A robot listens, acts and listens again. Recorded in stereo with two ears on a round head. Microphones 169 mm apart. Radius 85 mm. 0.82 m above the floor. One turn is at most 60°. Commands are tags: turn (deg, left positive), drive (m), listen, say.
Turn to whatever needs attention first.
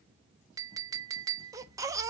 <turn deg="-20"/>
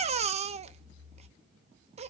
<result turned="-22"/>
<turn deg="-60"/>
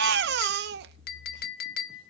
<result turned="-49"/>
<turn deg="-60"/>
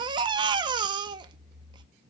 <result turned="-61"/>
<turn deg="-25"/>
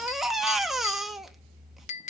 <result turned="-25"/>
<say>Facing the baby crying.</say>